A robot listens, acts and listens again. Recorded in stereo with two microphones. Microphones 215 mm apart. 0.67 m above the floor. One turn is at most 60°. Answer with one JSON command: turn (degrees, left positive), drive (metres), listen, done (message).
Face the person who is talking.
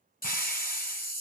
{"listen": true}
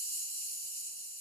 {"listen": true}
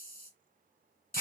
{"done": "I can't make out anyone speaking, only a hiss."}